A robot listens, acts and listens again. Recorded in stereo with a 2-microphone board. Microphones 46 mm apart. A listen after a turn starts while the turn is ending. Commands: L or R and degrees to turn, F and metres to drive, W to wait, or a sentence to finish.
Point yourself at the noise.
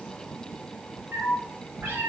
R45
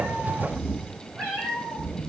R10
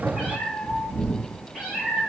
Facing the cat meowing.